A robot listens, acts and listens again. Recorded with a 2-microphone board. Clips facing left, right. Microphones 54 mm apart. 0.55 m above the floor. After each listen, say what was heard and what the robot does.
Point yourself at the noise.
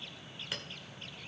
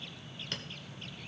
Turn 30° left.
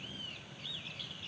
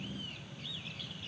Keep listening.
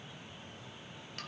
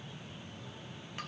Keep listening.
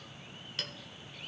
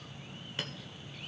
So it is at 20° right. Turn 20° right.
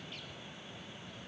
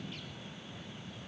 Keep listening.
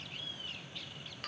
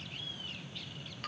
Keep listening.
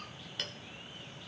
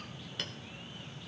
Found it: a clink, straight ahead.